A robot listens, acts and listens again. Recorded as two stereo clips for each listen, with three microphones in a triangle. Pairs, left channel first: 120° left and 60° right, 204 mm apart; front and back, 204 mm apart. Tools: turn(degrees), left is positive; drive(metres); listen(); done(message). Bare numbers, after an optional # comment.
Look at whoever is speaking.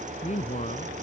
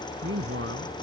# The man speaking: 170° left.
turn(170)
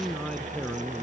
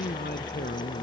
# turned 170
# The man speaking is now 35° left.
turn(35)
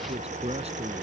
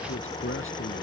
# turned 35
listen()
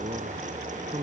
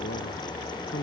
done("Facing the man speaking.")